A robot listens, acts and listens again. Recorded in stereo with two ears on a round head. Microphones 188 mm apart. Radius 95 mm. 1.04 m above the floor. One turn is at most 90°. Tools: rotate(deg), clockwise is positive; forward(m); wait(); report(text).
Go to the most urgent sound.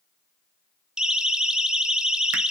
rotate(30)
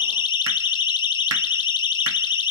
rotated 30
rotate(-25)
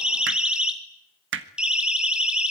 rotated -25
forward(1.0)
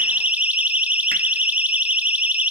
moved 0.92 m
forward(1.0)
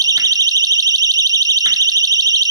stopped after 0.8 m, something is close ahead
rotate(20)
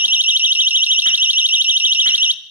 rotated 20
rotate(10)
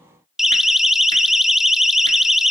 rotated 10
report("Arrived at the siren, straight ahead.")